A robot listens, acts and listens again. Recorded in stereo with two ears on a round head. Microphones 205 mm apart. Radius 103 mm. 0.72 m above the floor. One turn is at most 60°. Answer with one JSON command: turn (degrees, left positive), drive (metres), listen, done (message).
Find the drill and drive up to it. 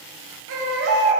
{"listen": true}
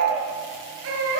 {"listen": true}
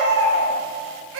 {"done": "I can't make out a drill to turn to."}